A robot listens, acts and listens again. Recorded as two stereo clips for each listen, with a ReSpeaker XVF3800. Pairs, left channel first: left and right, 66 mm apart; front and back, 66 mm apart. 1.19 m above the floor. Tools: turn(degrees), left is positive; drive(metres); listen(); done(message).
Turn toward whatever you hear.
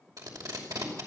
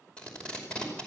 turn(degrees=-75)
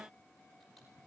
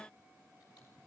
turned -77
listen()
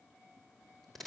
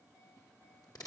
done("Found it: tape being pulled, straight ahead.")